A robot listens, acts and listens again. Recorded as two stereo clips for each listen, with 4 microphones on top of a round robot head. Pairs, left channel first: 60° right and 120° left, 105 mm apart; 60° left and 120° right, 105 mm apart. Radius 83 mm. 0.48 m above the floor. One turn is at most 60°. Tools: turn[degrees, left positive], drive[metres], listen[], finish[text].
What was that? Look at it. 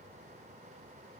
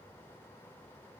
Action: listen[]
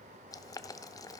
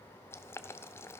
Action: finish[Found it: boiling, straight ahead, under 1 m away.]